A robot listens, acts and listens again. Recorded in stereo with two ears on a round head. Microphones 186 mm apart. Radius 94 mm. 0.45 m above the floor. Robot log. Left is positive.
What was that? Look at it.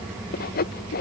note: The sawing: about 50° left or 130° left.
cmd yaw +50
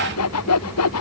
note: So it is at 80° left.
cmd yaw +80
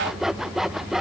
end: Facing the sawing.